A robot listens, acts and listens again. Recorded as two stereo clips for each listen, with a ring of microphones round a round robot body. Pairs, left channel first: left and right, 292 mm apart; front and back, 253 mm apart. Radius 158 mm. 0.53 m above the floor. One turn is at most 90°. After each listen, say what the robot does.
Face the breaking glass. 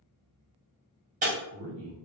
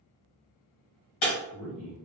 Turn 25° right.
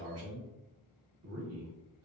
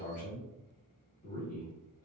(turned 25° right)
Facing where the breaking glass came from. I can't hear it now.